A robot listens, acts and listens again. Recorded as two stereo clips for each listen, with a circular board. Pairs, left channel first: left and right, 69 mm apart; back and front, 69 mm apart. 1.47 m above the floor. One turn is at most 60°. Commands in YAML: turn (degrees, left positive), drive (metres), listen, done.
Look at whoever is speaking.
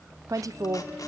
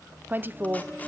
turn: -60
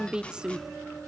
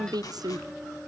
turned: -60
turn: -15
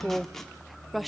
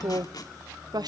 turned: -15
done: "Facing the woman speaking."